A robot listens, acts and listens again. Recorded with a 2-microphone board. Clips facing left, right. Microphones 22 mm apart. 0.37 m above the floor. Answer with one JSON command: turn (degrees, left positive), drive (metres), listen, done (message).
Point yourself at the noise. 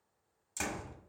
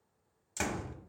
{"turn": -30}
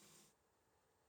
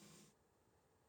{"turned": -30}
{"listen": true}
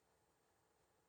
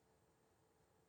{"done": "I heard a door slam, but can't make it out now. It was about 20° left or 140° right."}